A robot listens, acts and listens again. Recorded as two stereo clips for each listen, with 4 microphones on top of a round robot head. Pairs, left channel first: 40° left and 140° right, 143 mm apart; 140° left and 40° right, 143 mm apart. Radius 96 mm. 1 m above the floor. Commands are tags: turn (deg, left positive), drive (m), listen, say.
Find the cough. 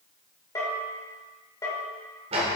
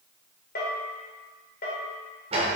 <listen/>
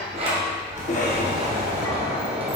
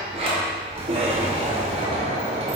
<say>Facing the cough, 2 to 4 m away.</say>